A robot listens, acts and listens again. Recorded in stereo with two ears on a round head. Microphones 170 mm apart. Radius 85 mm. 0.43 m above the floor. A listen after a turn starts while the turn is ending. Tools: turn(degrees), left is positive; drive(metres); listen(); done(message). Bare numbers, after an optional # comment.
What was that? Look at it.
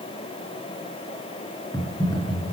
# The typing on a keyboard: about 15° left or 165° left.
turn(15)
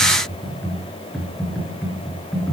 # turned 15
done("Found it: typing on a keyboard, straight ahead, over 4 m away.")